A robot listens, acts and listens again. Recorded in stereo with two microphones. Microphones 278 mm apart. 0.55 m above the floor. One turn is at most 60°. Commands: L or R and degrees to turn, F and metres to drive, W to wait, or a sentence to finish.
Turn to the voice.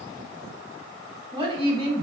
R20
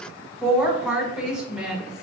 Found it: a woman speaking, straight ahead, 1 to 2 m away.